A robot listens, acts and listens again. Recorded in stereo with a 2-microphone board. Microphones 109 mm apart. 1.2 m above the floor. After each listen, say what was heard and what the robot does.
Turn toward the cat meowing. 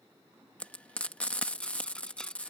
Keep listening.
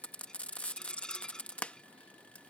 Keep listening.
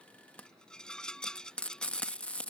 I can't make out a cat meowing, only a rattle and frying.